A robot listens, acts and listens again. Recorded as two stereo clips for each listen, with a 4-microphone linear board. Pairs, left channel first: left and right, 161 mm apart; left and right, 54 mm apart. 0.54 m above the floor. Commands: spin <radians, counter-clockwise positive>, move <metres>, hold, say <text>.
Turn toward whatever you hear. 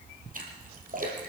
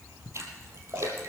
spin -0.96
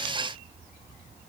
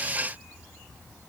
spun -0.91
hold
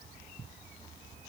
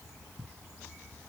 say I heard a splash, but can't make it out now. It was about 5° right or 75° right.